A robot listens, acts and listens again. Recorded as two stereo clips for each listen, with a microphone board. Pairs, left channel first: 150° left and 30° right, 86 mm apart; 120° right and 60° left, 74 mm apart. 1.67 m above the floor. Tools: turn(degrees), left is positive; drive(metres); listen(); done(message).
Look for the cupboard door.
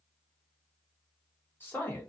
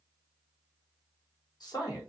listen()
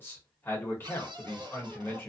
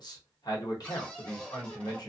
turn(degrees=-45)
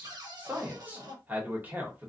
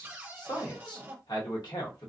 done("Facing the cupboard door, under 1 m away.")